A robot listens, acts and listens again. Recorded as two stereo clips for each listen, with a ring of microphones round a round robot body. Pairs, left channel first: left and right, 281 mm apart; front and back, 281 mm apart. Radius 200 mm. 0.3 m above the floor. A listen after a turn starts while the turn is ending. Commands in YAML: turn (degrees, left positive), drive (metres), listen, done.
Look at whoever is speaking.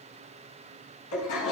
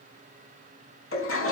listen: true
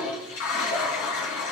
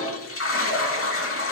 listen: true
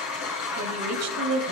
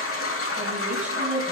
turn: -95
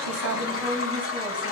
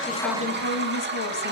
done: "Facing the woman speaking, 1 to 2 m away."